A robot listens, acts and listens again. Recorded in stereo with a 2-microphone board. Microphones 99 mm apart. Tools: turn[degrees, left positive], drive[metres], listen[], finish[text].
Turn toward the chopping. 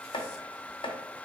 Thought: The chopping: about 55° left or 125° left.
Action: turn[55]
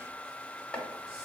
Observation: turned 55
Thought: So it is at 15° left.
Action: turn[15]
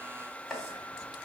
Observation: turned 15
Action: finish[Facing the chopping, under 1 m away.]